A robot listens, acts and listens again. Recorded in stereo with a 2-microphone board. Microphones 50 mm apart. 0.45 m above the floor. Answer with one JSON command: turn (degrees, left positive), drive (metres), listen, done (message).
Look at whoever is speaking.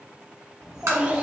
{"turn": -20}
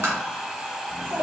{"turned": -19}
{"turn": -125}
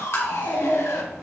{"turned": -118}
{"turn": 50}
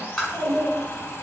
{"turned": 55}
{"turn": 15}
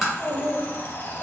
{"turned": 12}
{"done": "Found it: a child speaking, straight ahead, 2 to 4 m away."}